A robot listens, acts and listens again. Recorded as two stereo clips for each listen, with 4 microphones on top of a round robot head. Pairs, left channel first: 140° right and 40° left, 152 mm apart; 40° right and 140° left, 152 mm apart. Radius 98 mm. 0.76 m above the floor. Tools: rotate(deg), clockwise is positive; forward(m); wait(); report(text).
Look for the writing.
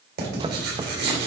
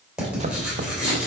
rotate(-55)
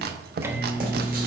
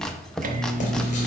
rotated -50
wait()
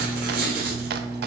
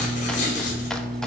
report("Found it: writing, straight ahead, 2 to 4 m away.")